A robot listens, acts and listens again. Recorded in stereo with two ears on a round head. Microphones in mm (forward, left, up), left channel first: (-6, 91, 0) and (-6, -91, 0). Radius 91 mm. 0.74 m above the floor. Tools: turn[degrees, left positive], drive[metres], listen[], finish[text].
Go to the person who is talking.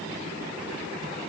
Action: listen[]
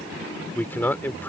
Action: turn[30]
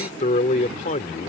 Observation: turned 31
Thought: So it is at 135° left.
Action: turn[135]
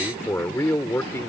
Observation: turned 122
Thought: The man speaking is now 15° left.
Action: turn[15]
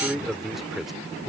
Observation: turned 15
Action: drive[1.0]
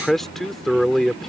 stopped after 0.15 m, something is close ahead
Action: finish[Blocked. The man speaking is further on, straight ahead.]